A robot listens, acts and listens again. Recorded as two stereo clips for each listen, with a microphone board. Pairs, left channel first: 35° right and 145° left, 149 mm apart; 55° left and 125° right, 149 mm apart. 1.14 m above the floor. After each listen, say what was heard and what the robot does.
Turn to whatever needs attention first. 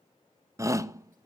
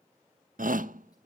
The shout: 145° right. Turn 145° right.
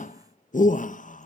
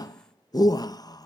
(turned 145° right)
Facing the shout, 1 to 2 m away.